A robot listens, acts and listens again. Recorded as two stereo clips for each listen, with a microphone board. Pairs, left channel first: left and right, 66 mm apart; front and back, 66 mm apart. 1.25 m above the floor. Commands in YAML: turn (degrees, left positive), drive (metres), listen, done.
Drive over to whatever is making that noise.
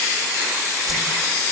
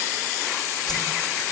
drive: 1.0
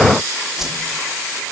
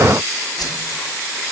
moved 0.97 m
drive: 1.0
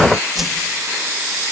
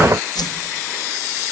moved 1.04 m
drive: 1.0
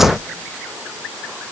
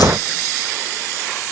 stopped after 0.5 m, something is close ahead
listen: true
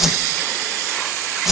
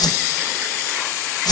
done: "Arrived at the whoosh, straight ahead."